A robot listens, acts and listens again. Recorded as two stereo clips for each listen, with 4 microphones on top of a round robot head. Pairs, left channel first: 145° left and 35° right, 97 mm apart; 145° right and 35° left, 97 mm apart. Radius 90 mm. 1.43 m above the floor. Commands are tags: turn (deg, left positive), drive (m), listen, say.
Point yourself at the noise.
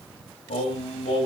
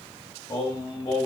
<turn deg="165"/>
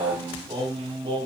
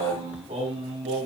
<say>Facing the singing.</say>